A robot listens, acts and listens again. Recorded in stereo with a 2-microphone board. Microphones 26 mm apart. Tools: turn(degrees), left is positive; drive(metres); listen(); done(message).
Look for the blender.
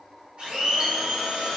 turn(degrees=-45)
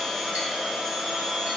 done("Facing the blender, 1 to 2 m away.")